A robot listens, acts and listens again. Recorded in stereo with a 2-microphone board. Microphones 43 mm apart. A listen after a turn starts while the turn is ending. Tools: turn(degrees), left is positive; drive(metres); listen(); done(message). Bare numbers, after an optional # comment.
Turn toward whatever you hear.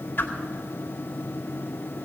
# The whoosh: about 55° left or 125° left.
turn(55)
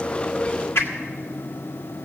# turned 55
# So it is at 75° left.
turn(75)
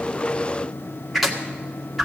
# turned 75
done("Facing the whoosh.")